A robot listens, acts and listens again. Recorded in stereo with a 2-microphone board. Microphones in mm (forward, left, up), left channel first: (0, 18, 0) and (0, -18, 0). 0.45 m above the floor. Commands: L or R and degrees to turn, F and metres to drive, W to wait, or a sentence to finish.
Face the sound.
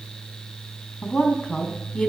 L25
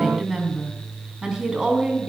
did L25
R20
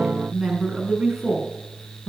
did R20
R15
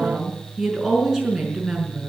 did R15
Facing the woman speaking, over 4 m away.